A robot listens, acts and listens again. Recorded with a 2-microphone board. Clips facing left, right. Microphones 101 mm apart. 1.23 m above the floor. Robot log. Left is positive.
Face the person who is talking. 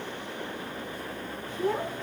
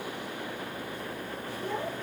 cmd yaw +90
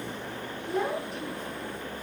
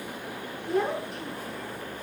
end: Found it: a child speaking, straight ahead, over 4 m away.